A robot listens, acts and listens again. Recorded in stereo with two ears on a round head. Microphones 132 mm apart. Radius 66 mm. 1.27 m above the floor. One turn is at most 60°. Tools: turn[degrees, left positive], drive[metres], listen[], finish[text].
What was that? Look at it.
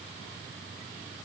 Action: listen[]
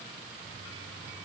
Action: listen[]
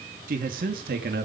Thought: The man speaking: about 65° right or 115° right.
Action: turn[-60]
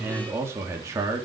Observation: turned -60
Thought: So it is at 20° right.
Action: turn[-20]
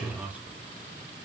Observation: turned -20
Thought: The man speaking is now 10° right.
Action: turn[-10]
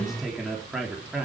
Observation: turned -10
Action: finish[Facing the man speaking, 2 to 4 m away.]